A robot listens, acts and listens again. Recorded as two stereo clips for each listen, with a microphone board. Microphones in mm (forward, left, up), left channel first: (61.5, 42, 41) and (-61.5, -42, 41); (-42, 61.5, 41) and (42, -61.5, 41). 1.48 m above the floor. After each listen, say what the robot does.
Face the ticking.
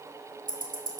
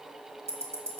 Turn 125° right.
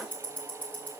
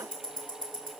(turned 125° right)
Turn 45° right.
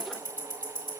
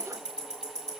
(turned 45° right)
Turn 20° right.
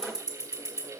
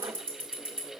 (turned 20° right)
Found it: ticking, straight ahead.